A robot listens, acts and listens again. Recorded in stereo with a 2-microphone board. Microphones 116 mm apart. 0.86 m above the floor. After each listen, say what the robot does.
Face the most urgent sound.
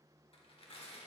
Keep listening.
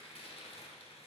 Keep listening.
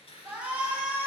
Turn 30° right.
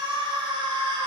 Turn 135° right.
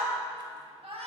Turn 60° right.
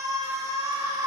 Turn 30° right.
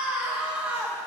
Turn 10° right.
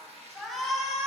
Facing the shout, 1 to 2 m away.